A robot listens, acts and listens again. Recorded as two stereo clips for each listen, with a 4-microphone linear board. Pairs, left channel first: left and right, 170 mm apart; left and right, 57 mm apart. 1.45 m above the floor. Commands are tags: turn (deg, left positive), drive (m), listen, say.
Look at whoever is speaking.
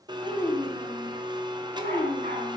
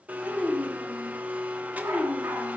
<turn deg="30"/>
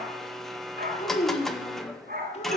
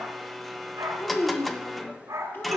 <turn deg="140"/>
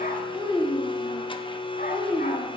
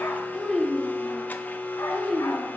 <say>Facing the child speaking, 2 to 4 m away.</say>